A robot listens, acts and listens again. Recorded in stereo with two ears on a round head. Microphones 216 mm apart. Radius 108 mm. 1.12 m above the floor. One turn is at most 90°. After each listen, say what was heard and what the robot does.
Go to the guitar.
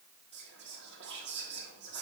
Keep listening.
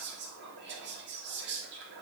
Keep listening.
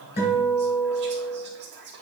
The guitar: about 45° left or 135° left. Turn 45° left.
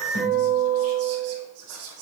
So it is at 90° left. Turn 90° left.
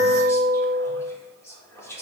The guitar is now 10° right. Turn 10° right.
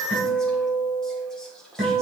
Drive 1.0 m forward.
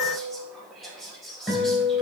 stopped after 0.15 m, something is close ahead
Blocked. The guitar is further on, straight ahead.